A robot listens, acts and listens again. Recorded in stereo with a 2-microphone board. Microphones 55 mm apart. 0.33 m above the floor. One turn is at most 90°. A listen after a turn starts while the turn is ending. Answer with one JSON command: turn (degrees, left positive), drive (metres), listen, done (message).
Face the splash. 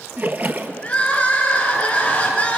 {"turn": -35}
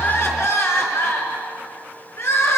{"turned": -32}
{"listen": true}
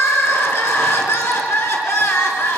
{"done": "I heard a splash, but can't make it out now. It was about straight ahead or 115° right."}